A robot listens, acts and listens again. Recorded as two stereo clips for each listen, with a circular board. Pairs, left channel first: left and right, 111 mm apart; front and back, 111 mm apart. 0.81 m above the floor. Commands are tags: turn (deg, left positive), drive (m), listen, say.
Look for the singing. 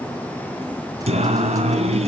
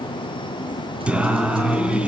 <turn deg="-100"/>
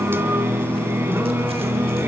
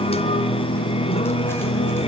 <turn deg="-20"/>
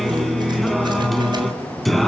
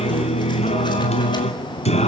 <say>Facing the singing.</say>